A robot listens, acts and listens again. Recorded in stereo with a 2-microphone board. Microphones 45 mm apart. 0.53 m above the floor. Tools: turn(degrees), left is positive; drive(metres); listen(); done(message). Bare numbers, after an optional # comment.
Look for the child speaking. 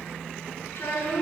# The child speaking: about 70° left or 110° left.
turn(70)
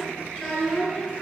done("Found it: a child speaking, straight ahead, over 4 m away.")